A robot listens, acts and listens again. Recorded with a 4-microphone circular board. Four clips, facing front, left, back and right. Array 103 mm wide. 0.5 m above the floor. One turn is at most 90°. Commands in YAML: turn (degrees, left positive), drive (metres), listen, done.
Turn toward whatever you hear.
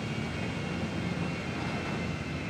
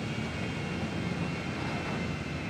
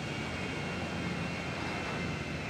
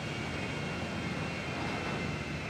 listen: true
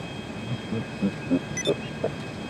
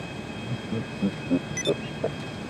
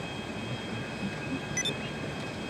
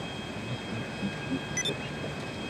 turn: 40
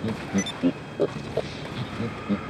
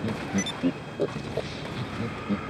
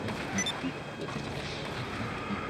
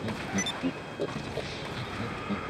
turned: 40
done: "Facing the laughter."